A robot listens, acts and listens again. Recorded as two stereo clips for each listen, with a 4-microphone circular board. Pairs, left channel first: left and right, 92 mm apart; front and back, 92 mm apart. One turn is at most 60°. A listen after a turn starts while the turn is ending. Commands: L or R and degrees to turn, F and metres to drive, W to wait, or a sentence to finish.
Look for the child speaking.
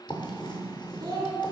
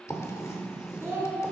R60
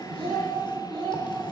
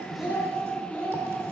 R60
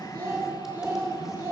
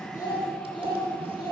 R35
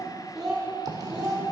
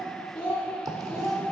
R15
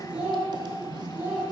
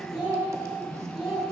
R20
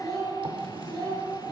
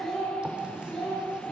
Found it: a child speaking, straight ahead, 1 to 2 m away.